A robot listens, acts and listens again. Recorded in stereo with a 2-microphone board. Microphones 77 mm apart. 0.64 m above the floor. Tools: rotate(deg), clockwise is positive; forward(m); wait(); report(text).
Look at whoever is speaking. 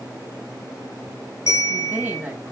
rotate(20)
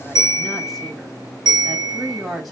report("Found it: a woman speaking, straight ahead, over 4 m away.")